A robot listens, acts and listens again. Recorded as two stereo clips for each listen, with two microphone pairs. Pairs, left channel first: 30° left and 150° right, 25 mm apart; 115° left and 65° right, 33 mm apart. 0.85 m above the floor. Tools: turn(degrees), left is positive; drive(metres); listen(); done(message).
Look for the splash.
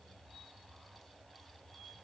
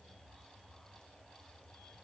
listen()
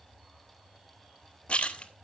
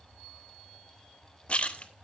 turn(degrees=60)
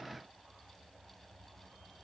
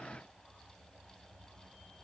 done("I heard a splash from this way, but can't make it out now.")